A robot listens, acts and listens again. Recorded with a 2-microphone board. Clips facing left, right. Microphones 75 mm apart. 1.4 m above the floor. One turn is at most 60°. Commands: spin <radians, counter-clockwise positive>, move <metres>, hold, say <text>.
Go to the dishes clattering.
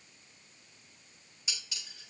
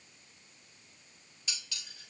spin 0.26
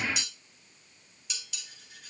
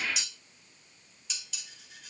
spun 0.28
move 1.0
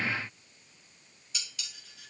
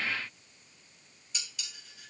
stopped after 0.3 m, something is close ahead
say Something is in my way. I am facing the dishes clattering but have not reached it.